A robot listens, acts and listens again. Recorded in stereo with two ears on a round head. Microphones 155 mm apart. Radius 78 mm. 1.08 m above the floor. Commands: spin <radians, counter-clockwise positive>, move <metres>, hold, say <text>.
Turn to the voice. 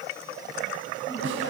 hold
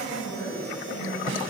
spin 1.22
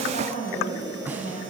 spin 0.70
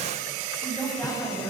say Found it: a woman speaking, straight ahead.